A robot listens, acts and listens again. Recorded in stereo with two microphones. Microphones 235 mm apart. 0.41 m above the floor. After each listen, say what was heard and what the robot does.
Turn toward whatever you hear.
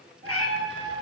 The cat meowing: about 70° left or 110° left. Turn 70° left.
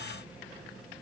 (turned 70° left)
Keep listening.
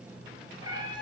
So it is at 20° right. Turn 20° right.
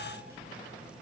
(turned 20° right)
Keep listening.
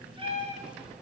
The cat meowing is now 35° right. Turn 35° right.
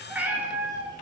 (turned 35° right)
The cat meowing is now 15° right. Turn 15° right.
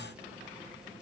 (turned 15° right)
Keep listening.
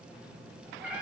Facing the cat meowing.